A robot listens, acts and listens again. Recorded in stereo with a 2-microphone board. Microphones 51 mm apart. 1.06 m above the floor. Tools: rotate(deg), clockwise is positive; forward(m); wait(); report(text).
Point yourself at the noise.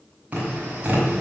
rotate(30)
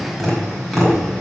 report("Facing the tapping.")